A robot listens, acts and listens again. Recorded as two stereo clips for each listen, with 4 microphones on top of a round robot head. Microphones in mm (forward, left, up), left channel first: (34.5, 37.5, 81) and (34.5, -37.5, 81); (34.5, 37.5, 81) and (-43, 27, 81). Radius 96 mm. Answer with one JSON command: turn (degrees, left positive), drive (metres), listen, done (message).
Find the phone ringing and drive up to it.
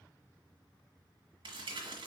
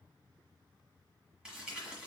{"listen": true}
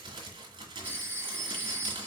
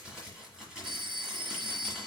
{"turn": -155}
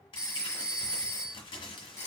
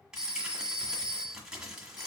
{"turn": 40}
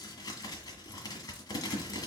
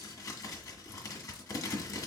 {"listen": true}
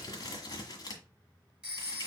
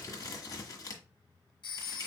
{"turn": -10}
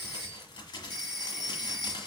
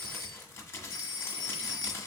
{"drive": 1.0}
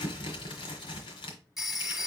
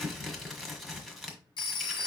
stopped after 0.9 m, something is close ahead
{"done": "Arrived at the phone ringing, straight ahead."}